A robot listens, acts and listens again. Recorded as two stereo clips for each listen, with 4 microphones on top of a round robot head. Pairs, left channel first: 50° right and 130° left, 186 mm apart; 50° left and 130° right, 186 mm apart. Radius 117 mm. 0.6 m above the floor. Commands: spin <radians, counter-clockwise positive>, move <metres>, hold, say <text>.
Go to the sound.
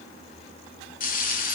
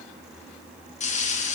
move 1.0
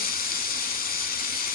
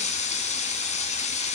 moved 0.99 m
move 1.0
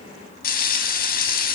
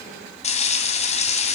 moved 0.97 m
move 1.0
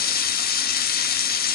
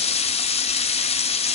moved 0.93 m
spin -0.17
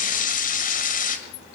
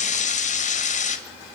move 1.0
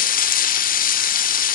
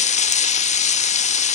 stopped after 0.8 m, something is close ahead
say I am next to the frying.